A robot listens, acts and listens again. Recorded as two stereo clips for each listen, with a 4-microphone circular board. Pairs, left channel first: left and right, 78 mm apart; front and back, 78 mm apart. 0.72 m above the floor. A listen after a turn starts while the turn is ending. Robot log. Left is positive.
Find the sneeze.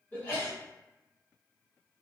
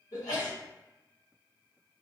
note: The sneeze: 25° left.
cmd yaw +25
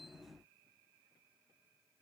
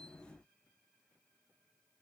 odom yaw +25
end: Facing where the sneeze came from. I can't hear it now.